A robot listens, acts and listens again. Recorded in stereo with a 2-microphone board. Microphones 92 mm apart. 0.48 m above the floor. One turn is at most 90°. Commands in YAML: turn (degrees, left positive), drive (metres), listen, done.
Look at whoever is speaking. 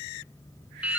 listen: true
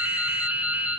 listen: true
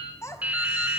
turn: 30
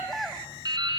done: "Facing the child speaking."